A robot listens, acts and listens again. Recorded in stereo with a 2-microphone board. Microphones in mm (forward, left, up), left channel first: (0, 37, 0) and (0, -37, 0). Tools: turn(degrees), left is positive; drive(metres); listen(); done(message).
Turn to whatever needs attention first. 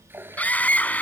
turn(degrees=20)
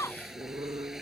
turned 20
turn(degrees=140)
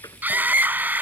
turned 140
turn(degrees=-20)
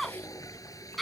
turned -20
done("Found it: a scream, straight ahead.")